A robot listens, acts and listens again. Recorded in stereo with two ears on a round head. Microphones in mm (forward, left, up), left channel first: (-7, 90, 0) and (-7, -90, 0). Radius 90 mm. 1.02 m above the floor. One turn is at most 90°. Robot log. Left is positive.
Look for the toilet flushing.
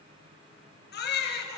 cmd idle
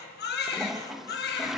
cmd yaw +30
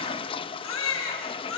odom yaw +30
note: So it is at 150° left.
cmd yaw +90
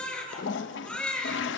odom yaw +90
note: The toilet flushing is now 65° left.
cmd yaw +65
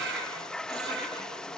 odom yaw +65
end: Facing the toilet flushing.